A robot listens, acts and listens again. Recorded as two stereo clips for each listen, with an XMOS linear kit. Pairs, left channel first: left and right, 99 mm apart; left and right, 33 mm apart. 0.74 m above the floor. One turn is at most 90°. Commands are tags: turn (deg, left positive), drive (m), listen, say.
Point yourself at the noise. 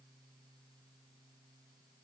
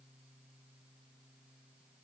<listen/>
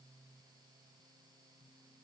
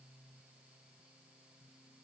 <listen/>
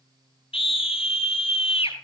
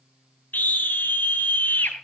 <turn deg="70"/>
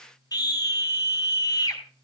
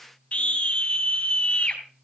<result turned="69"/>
<turn deg="40"/>
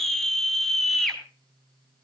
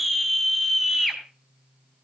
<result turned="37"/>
<say>Facing the scream.</say>